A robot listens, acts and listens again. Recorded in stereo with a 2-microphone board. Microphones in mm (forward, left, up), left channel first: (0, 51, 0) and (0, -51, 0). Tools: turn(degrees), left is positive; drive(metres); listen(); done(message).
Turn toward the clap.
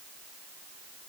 listen()
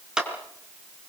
turn(degrees=-30)
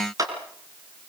turn(degrees=-140)
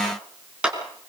turn(degrees=-10)
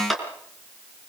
done("Found it: a clap, straight ahead, over 4 m away.")